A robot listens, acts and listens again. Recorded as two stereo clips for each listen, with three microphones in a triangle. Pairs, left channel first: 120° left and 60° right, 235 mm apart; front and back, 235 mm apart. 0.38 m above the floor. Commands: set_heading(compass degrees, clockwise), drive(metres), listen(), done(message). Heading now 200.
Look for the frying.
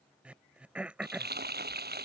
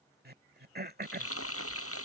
set_heading(215)
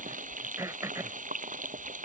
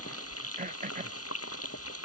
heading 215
done("Facing the frying.")